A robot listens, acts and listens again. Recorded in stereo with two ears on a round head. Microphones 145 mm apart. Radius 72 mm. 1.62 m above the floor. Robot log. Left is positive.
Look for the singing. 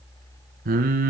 note: The singing: about 60° right or 120° right.
cmd yaw -60
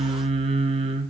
note: So it is at 45° right.
cmd yaw -45
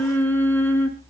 note: The singing is now 15° left.
cmd yaw +15
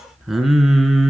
end: Facing the singing.